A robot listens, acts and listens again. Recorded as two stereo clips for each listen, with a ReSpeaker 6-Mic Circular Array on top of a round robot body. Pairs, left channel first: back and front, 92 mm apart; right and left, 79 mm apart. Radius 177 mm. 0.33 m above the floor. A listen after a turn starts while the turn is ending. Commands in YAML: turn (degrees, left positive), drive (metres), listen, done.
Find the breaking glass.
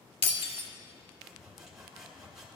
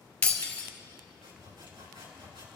turn: -165
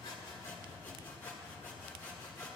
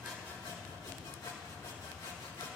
done: "I heard breaking glass from this way, but can't make it out now."